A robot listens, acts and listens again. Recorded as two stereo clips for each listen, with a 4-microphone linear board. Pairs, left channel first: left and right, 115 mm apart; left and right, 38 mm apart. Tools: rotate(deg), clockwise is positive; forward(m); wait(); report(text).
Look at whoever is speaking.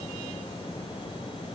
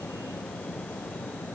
wait()
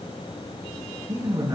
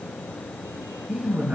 rotate(35)
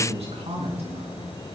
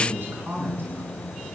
rotate(110)
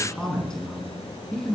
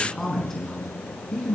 report("Found it: a man speaking, straight ahead, over 4 m away.")